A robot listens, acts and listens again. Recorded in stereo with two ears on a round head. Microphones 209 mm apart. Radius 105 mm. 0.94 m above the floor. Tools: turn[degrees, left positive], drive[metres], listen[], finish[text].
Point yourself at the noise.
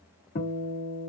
Thought: The guitar: about 50° left or 130° left.
Action: turn[50]
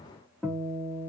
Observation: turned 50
Action: finish[Facing the guitar.]